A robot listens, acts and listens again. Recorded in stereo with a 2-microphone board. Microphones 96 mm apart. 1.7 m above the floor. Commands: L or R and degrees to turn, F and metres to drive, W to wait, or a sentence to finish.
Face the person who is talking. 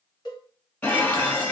W
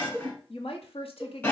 L90
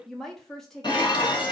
Facing the woman speaking.